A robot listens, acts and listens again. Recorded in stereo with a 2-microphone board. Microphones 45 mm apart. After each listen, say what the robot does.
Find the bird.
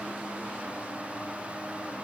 Keep listening.
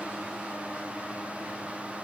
Keep listening.
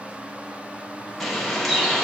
Turn 30° left.
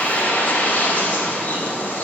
Turn 145° left.
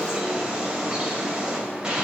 Turn 20° right.
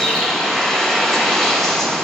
Facing the bird, 2 to 4 m away.